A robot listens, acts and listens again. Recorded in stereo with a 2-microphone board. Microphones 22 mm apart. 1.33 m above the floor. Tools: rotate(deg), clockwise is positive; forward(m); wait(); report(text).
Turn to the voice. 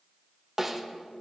wait()
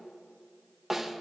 wait()
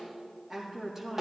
rotate(15)
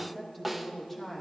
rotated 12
rotate(-30)
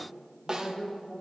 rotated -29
report("Found it: a woman speaking, straight ahead, 2 to 4 m away.")